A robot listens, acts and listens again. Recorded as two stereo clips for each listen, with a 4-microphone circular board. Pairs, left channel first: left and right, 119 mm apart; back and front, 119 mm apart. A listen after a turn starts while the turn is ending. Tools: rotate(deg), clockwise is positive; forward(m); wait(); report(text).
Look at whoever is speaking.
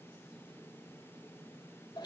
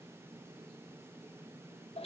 wait()
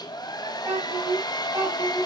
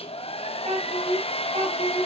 rotate(25)
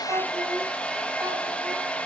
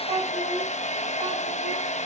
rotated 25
wait()
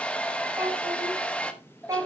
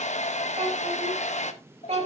rotate(25)
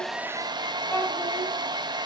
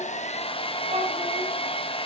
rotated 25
wait()
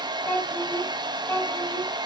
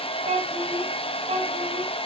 rotate(-20)
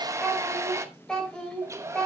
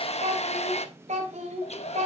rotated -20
report("Facing the child speaking.")